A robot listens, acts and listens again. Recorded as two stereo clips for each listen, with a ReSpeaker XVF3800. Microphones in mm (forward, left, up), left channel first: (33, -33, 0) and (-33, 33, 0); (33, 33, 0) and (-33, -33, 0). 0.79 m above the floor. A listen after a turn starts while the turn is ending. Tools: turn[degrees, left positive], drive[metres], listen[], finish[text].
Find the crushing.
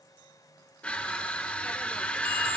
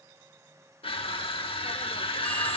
Thought: The crushing: 30° left.
Action: turn[30]
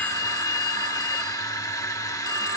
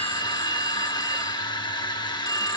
Thought: The crushing is now 10° left.
Action: turn[10]
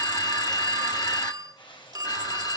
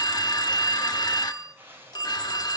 Action: listen[]
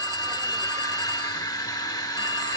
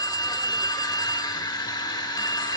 Action: finish[Facing the crushing.]